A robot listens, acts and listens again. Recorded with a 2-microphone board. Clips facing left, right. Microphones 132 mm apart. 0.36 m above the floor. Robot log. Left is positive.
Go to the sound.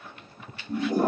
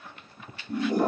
cmd yaw +30
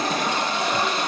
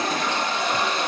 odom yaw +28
note: So it is at 145° left.
cmd yaw +145
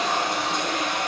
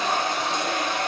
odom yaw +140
cmd fwd 1.0
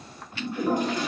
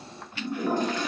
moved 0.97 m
note: The toilet flushing is now 15° left.
cmd yaw +15
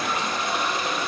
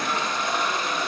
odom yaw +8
cmd fwd 1.0
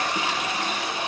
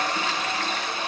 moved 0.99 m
note: The toilet flushing is now 15° left.
cmd yaw +15
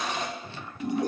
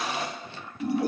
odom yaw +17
cmd fwd 1.0
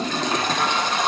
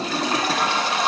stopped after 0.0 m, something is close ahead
end: Arrived at the toilet flushing, straight ahead.